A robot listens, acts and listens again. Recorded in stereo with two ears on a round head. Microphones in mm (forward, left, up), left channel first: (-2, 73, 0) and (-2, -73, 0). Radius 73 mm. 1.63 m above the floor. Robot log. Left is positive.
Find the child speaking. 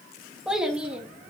cmd yaw -30
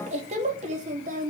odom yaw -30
note: So it is at 130° right.
cmd yaw -130
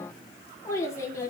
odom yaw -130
note: The child speaking is now 20° left.
cmd yaw +20
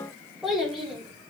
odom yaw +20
end: Found it: a child speaking, straight ahead.